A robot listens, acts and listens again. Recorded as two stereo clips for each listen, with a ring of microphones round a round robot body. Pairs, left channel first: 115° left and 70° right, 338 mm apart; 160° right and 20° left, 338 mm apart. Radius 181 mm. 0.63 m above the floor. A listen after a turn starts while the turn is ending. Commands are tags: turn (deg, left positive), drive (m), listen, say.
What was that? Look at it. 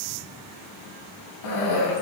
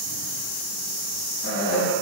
<turn deg="145"/>
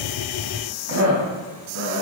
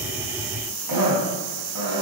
<turn deg="-20"/>
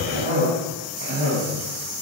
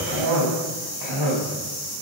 <say>Found it: a cough, straight ahead, over 4 m away.</say>